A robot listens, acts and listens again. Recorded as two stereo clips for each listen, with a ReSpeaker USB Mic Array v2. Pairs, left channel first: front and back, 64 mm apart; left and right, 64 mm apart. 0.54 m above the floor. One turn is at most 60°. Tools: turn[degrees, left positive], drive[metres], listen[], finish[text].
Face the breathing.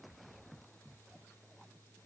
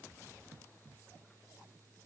Action: listen[]
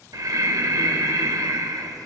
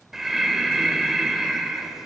Thought: The breathing: 175° right.
Action: turn[-60]
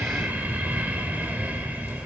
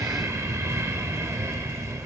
Thought: The breathing is now 125° right.
Action: turn[-60]
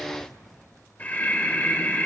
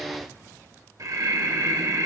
Thought: The breathing is now 65° right.
Action: turn[-60]
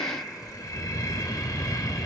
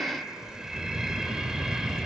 Thought: The breathing is now 10° right.
Action: turn[-10]
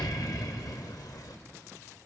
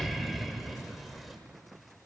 Action: finish[Facing the breathing, 1 to 2 m away.]